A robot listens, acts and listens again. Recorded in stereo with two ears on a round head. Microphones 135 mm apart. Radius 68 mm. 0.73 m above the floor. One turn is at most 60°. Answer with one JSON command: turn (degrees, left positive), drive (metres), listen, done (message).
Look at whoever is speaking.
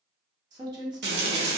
{"turn": -25}
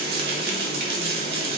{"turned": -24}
{"listen": true}
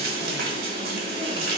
{"listen": true}
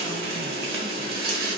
{"done": "I heard a woman speaking, but can't make it out now. It was about straight ahead or 130° right."}